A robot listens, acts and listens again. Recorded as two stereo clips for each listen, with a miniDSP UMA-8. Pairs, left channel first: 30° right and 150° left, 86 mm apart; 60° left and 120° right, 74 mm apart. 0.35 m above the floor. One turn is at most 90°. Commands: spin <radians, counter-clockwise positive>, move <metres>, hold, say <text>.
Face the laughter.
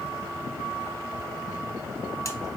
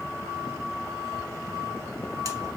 hold
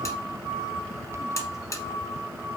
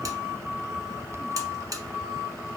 hold
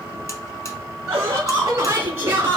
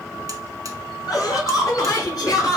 spin 1.57
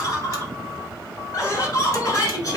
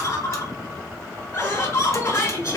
spin 0.26
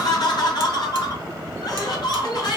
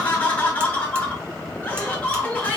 say Found it: laughter, straight ahead.